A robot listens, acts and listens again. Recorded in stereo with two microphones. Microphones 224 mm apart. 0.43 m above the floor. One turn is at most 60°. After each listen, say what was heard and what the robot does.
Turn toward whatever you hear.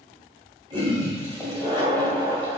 The toilet flushing: about 25° right or 155° right. Turn 25° right.
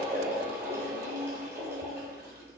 So it is at 125° right. Turn 60° right.
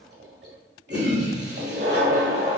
The toilet flushing is now 60° right. Turn 60° right.
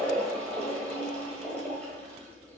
Found it: a toilet flushing, straight ahead, 1 to 2 m away.